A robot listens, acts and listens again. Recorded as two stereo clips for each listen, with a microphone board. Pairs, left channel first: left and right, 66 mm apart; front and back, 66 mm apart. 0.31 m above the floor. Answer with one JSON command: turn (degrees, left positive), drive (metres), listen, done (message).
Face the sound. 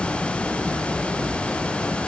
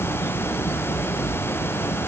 {"listen": true}
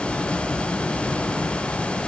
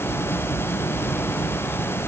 {"listen": true}
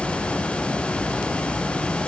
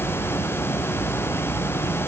{"done": "I can't make out anything to turn to."}